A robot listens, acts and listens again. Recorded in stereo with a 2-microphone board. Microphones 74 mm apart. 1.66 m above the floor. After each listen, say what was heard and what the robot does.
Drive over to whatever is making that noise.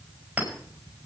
The clink: about 20° right or 160° right. Turn 20° right.
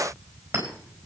So it is at 140° right. Turn 140° right.
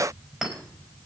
The clink is now 10° right. Turn 10° right.
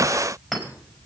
Drive 1.0 m forward.
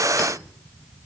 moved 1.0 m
Keep listening.
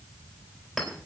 Drive 1.0 m forward.
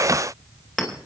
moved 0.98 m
Drive 1.0 m forward.
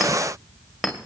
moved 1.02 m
Drive 1.0 m forward.
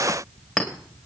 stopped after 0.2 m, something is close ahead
I am next to the clink.